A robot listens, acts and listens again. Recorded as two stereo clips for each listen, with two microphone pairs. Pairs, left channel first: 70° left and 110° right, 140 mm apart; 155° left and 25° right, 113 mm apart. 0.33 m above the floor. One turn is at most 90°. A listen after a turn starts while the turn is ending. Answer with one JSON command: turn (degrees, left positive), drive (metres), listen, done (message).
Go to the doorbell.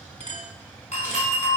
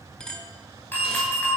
{"turn": 85}
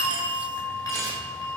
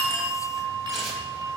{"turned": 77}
{"turn": 10}
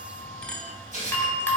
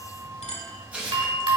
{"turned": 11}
{"drive": 1.0}
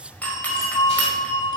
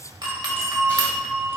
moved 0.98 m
{"drive": 1.0}
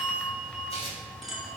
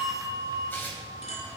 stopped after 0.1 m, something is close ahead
{"turn": -10}
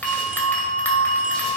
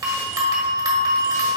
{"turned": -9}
{"done": "I am next to the doorbell."}